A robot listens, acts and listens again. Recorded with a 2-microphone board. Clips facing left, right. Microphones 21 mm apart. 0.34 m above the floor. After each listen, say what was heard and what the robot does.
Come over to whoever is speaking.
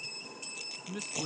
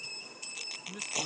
The man speaking: about 15° left or 165° left. Turn 15° left.
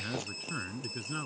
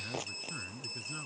So it is at 150° left. Turn 150° left.
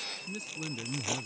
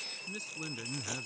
The man speaking is now 10° right. Turn 10° right.
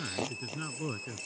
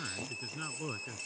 Drive 1.0 m forward.
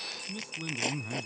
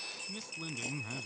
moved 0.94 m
Drive 1.0 m forward.
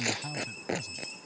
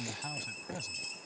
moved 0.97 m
The man speaking is now 10° right. Turn 10° right.
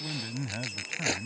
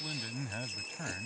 Drive 1.0 m forward.
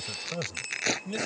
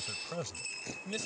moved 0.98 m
Drive 1.0 m forward.
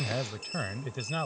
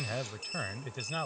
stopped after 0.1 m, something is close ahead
I am next to the man speaking.